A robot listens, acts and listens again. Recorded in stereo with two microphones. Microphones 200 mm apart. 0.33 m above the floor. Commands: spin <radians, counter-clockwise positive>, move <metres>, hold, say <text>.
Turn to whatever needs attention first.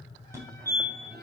spin -0.52
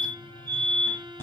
spin 0.26
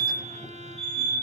say Found it: a fire alarm, straight ahead.